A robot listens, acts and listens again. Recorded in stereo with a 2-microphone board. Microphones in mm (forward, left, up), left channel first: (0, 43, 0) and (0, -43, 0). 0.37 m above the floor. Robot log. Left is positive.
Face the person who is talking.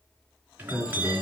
cmd yaw +30
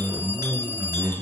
note: So it is at 25° right.
cmd yaw -25
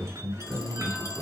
end: Found it: a man speaking, straight ahead, 2 to 4 m away.